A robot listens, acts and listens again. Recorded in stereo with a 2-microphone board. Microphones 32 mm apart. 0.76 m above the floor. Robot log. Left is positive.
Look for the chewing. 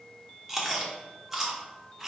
cmd yaw -30
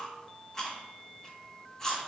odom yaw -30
note: So it is at 20° left.
cmd yaw +20
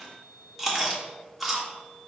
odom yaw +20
end: Facing the chewing.